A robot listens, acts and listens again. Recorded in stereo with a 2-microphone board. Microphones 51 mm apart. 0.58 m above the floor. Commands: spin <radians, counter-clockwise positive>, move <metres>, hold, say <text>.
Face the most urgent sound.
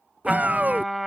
spin -0.52
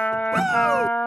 say Found it: a shout, straight ahead.